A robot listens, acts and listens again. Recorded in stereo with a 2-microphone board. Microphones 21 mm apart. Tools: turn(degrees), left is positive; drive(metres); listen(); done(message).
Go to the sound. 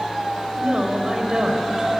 turn(degrees=-30)
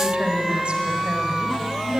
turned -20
turn(degrees=-125)
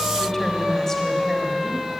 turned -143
turn(degrees=15)
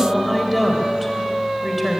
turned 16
drive(metres=1.0)
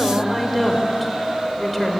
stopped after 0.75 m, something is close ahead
done("Blocked. The woman speaking is further on, straight ahead.")